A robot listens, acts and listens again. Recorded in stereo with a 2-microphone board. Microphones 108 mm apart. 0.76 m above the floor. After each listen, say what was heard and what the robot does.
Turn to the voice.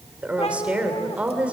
Turn 30° right.
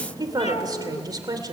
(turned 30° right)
So it is at 140° right. Turn 140° right.
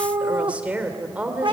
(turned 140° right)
The woman speaking is now 10° right. Turn 10° right.
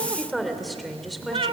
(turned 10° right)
Found it: a woman speaking, straight ahead.